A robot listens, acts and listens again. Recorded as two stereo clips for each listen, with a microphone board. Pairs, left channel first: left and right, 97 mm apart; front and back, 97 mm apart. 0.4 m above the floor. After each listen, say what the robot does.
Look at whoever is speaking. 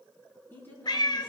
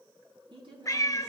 Turn 155° left.
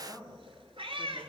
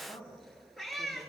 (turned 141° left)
Turn 15° left.
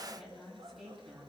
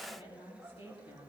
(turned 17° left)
Found it: a woman speaking, straight ahead, 2 to 4 m away.